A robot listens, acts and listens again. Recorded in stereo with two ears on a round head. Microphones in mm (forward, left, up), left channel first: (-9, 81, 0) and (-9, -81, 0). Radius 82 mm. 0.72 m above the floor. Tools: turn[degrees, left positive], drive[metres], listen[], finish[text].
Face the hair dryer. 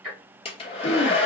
Thought: The hair dryer: about 30° left or 150° left.
Action: turn[30]
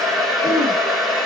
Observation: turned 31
Action: finish[Facing the hair dryer.]